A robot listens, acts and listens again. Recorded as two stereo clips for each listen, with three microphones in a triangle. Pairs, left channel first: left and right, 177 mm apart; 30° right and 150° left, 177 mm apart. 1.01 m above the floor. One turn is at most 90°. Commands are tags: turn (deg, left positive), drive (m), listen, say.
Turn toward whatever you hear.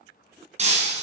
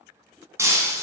<turn deg="-90"/>
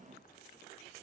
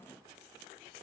<turn deg="-45"/>
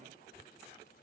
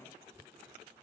<say>I heard breaking glass from this way, but can't make it out now.</say>